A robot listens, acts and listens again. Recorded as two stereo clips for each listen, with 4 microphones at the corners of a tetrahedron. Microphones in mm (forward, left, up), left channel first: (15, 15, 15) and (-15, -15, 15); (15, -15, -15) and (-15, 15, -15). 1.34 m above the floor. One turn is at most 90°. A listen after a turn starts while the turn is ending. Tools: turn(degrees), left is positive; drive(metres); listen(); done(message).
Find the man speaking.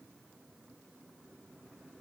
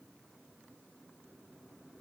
listen()
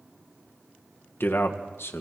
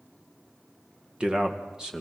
turn(degrees=60)
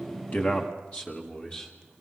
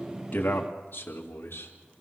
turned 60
turn(degrees=-20)
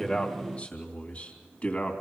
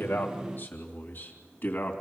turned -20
done("Facing the man speaking.")